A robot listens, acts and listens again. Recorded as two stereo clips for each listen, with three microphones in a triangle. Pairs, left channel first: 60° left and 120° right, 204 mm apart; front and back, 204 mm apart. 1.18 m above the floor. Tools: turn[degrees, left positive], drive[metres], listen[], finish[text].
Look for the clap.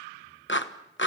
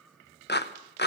Thought: The clap: 35° left.
Action: turn[35]
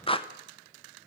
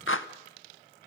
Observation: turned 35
Action: finish[Found it: a clap, straight ahead.]